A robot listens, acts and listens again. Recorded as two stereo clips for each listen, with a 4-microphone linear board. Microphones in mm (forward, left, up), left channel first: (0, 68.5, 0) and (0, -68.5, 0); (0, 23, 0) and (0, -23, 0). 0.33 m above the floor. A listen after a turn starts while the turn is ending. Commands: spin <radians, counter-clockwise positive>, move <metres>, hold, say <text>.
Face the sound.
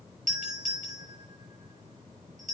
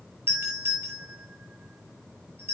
spin -1.13
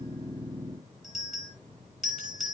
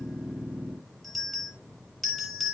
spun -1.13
say Found it: a doorbell, straight ahead.